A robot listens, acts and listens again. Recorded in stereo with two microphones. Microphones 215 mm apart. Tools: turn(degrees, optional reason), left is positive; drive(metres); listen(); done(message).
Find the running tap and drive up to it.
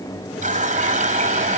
turn(degrees=-35, reason="The running tap: about 35° right or 145° right.")
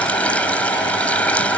drive(metres=1.0)
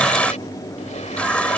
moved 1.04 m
drive(metres=1.0)
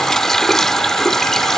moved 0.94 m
drive(metres=1.0)
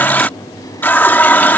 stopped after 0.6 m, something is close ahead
turn(degrees=10, reason="The running tap is now 10° left.")
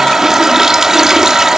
done("Arrived at the running tap, straight ahead.")